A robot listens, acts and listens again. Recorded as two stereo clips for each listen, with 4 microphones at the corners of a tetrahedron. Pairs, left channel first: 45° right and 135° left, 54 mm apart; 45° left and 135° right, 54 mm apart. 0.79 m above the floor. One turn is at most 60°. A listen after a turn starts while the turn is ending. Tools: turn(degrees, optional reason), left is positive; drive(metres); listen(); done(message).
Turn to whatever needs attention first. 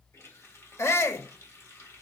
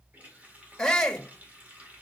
turn(degrees=-30, reason="The shout: 30° right.")
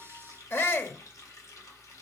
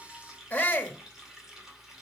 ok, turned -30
turn(degrees=-10, reason="The shout is now 10° right.")
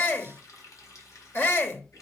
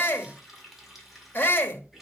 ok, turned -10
done("Facing the shout, 1 to 2 m away.")